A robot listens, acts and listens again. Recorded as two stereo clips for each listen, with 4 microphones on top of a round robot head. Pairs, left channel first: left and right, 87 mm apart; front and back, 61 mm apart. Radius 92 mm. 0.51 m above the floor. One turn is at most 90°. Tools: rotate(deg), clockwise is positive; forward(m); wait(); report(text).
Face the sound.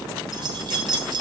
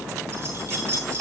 rotate(90)
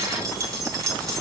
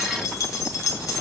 rotate(35)
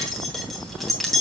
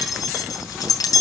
report("Facing the keys jangling.")